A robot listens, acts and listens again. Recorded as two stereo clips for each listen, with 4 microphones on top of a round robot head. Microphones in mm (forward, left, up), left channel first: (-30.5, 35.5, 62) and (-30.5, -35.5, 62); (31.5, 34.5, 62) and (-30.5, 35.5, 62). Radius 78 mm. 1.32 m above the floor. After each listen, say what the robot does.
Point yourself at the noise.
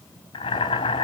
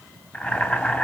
Turn 65° left.
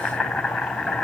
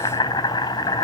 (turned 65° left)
Found it: boiling, straight ahead.